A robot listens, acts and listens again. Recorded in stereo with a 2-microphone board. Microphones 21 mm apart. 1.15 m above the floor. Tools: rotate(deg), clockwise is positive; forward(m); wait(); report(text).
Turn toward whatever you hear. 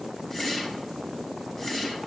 rotate(-25)
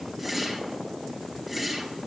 report("Facing the whoosh, 2 to 4 m away.")